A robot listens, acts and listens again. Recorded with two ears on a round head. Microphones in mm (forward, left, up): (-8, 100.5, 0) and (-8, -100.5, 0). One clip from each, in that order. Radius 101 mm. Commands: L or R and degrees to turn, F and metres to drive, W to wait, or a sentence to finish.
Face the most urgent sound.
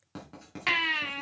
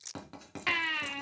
L30
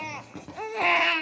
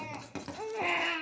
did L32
L135
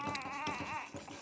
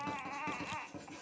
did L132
Facing the baby crying, under 1 m away.